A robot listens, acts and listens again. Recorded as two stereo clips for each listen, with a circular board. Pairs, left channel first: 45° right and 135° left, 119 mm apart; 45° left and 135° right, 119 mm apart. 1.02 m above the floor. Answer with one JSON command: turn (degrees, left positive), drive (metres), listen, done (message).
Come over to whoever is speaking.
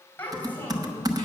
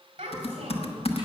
{"turn": -120}
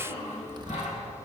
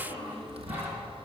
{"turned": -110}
{"turn": -10}
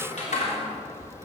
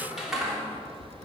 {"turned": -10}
{"listen": true}
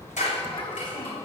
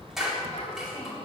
{"drive": 1.0}
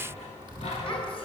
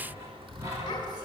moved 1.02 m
{"listen": true}
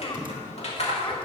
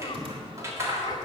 {"listen": true}
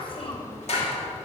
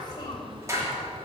{"done": "Facing where the child speaking came from. I can't hear it now. I did not reach it."}